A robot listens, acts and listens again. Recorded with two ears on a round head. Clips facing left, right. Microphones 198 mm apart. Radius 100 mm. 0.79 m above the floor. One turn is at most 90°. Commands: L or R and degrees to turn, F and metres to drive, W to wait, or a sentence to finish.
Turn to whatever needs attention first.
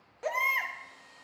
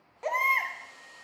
L30
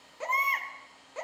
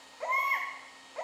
L90
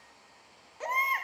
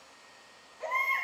L60
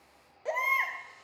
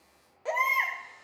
Found it: a baby crying, straight ahead.